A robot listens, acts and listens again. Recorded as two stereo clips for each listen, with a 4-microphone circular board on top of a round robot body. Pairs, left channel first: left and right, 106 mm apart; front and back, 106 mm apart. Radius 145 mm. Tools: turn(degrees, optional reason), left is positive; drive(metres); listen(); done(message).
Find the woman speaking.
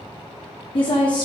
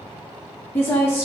turn(degrees=60, reason="The woman speaking: 60° left.")
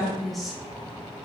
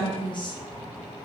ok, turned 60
done("Found it: a woman speaking, straight ahead, 1 to 2 m away.")